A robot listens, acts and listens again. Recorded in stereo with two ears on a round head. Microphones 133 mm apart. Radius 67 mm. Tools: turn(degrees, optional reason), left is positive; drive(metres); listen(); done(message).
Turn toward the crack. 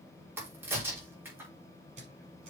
turn(degrees=-30)
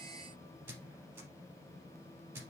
listen()
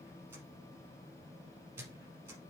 done("I heard a crack, but can't make it out now. It was about 15° left or 135° right.")